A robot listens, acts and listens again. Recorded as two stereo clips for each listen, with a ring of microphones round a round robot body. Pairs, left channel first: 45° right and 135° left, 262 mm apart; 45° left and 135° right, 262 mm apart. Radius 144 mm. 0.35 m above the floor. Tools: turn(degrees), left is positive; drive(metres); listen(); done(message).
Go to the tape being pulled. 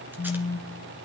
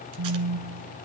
listen()
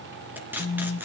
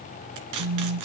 turn(degrees=-140)
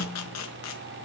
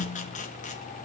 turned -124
turn(degrees=-20)
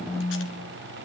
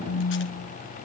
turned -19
listen()
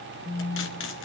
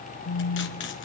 done("I heard tape being pulled from this way, but can't make it out now. I did not reach it.")